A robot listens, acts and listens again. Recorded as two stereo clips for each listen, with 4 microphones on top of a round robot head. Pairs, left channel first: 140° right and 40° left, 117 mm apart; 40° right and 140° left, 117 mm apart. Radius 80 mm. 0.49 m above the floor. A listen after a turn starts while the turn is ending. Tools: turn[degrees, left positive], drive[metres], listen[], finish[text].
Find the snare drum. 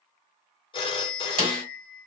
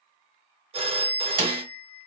Thought: The snare drum: 90° left.
Action: turn[90]
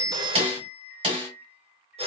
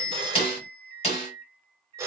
Thought: The snare drum is now 10° right.
Action: turn[-10]
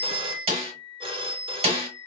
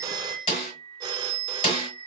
Action: finish[Found it: a snare drum, straight ahead.]